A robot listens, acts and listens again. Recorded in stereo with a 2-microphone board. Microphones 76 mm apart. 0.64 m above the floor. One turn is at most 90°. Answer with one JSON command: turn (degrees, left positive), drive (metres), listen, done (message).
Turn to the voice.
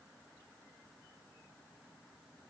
{"listen": true}
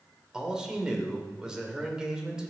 {"turn": -30}
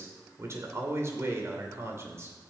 {"turn": -90}
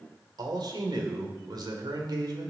{"turn": -85}
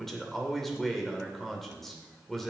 {"done": "Found it: a man speaking, straight ahead, 2 to 4 m away."}